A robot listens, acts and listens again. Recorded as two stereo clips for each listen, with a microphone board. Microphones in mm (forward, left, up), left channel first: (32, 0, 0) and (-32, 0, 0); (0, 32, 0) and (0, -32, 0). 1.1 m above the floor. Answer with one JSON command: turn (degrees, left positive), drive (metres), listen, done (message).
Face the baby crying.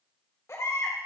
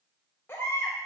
{"turn": 35}
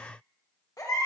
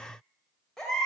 {"turn": 10}
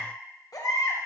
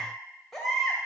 {"done": "Facing the baby crying, 2 to 4 m away."}